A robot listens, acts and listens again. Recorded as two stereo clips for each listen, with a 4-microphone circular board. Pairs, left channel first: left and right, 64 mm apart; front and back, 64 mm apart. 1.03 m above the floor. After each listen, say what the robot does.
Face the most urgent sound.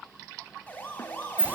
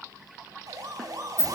Turn 155° left.
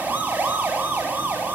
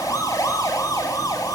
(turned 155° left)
Turn 25° right.
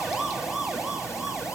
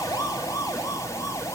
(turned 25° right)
Found it: a siren, straight ahead, over 4 m away.